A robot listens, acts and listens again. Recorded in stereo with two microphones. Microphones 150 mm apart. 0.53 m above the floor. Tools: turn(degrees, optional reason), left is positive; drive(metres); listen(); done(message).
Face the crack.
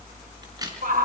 turn(degrees=-25, reason="The crack: about 25° right or 155° right.")
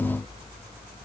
listen()
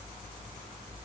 done("I heard a crack, but can't make it out now. It was about straight ahead or 130° right.")